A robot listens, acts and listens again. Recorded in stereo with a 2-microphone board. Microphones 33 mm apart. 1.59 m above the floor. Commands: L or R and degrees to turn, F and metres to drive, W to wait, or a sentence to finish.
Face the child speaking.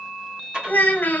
L65
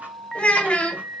L35
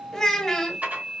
L10
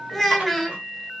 Facing the child speaking, 1 to 2 m away.